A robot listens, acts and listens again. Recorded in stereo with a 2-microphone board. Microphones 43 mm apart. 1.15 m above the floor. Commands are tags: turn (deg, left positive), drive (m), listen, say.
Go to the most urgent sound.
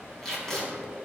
<listen/>
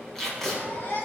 <turn deg="55"/>
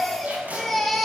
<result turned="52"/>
<drive m="1.0"/>
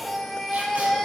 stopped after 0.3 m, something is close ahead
<say>Something is in my way. I am facing the baby crying but have not reached it.</say>